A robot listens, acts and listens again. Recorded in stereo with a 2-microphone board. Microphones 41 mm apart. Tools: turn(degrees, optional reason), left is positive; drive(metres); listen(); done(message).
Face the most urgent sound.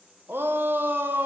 turn(degrees=-55, reason="The shout: about 55° right or 125° right.")
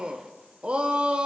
turn(degrees=-30, reason="So it is at 30° right.")
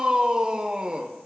turn(degrees=-25, reason="The shout is now 25° right.")
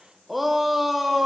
done("Found it: a shout, straight ahead.")